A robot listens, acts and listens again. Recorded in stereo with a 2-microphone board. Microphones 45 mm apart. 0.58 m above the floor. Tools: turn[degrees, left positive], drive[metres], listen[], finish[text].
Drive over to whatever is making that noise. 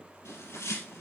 Action: turn[90]
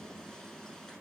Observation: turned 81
Thought: So it is at 10° left.
Action: turn[10]
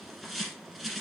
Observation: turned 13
Action: drive[1.0]
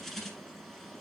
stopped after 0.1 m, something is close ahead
Action: finish[Something is in my way. I am facing the bird but have not reached it.]